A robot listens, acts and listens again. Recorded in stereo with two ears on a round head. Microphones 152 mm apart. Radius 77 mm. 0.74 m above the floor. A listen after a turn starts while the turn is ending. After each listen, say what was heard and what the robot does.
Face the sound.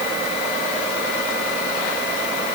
Keep listening.
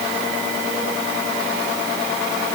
Keep listening.
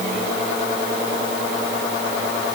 I can't make out anything to turn to.